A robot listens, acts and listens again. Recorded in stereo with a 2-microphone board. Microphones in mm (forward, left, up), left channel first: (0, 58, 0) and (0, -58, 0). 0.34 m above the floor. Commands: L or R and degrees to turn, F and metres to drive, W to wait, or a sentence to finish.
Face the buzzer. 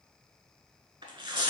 W
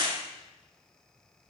W
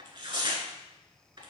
I can't make out a buzzer, only tearing paper.